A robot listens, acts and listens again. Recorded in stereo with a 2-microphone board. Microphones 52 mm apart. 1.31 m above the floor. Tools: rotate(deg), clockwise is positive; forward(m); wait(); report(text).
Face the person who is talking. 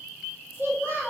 rotate(45)
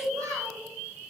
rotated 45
rotate(80)
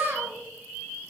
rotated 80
rotate(45)
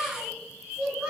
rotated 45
report("Facing the child speaking.")